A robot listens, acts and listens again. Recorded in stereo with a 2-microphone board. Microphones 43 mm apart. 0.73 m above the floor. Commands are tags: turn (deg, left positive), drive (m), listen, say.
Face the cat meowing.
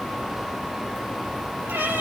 <turn deg="-70"/>
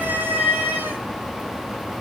<turn deg="-40"/>
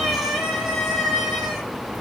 <turn deg="10"/>
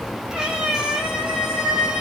<say>Facing the cat meowing.</say>